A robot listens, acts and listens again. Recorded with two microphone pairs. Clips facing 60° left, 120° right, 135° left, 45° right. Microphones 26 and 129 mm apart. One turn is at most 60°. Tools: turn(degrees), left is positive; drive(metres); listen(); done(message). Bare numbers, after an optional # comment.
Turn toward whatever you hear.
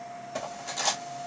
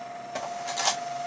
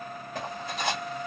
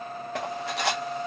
# The cutlery clinking: 55° right.
turn(-55)
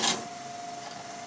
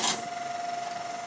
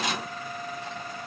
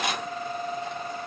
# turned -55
# The cutlery clinking is now 15° right.
turn(-15)
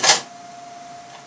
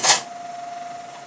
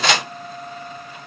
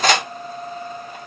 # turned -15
done("Found it: cutlery clinking, straight ahead, under 1 m away.")